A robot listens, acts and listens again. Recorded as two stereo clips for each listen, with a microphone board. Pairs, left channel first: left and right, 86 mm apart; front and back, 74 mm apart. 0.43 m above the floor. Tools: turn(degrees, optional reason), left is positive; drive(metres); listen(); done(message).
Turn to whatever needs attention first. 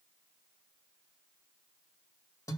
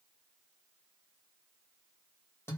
listen()
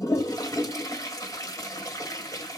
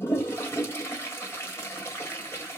listen()
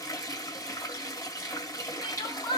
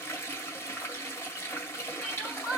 turn(degrees=100, reason="The crying: 100° left.")
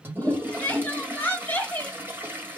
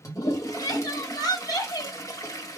turn(degrees=25, reason="The crying is now 25° left.")
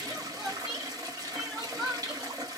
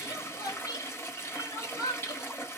done("Facing the crying.")